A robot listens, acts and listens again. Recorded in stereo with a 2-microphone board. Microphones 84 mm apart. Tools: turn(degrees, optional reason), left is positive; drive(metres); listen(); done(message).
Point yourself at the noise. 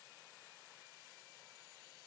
listen()
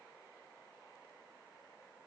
listen()
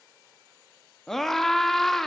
turn(degrees=30)
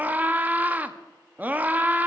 turn(degrees=-25, reason="So it is at 25° right.")
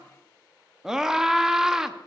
turn(degrees=-10, reason="The scream is now 10° right.")
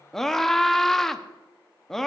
done("Facing the scream, under 1 m away.")